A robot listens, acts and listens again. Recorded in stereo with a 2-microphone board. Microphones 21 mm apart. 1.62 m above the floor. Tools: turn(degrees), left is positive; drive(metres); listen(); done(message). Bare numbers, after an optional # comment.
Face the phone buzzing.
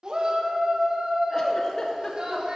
listen()
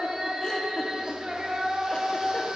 listen()
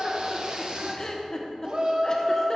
done("I can't make out a phone buzzing to turn to.")